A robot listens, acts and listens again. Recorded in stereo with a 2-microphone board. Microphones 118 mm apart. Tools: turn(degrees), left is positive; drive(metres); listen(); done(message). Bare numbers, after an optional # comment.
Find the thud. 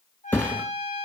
turn(30)
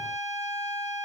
listen()
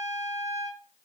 done("I heard a thud, but can't make it out now. It was about 15° right or 135° left.")